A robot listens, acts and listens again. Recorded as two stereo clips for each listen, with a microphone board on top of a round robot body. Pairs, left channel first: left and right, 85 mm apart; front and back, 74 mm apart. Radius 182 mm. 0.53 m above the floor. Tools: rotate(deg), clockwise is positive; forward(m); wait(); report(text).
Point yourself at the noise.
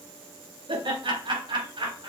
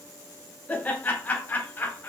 rotate(65)
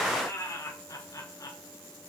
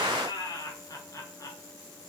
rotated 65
rotate(-40)
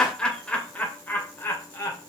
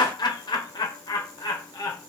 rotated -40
rotate(-30)
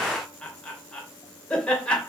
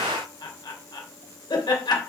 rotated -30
rotate(-10)
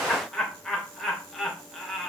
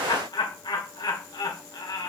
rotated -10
report("Found it: laughter, straight ahead, 2 to 4 m away.")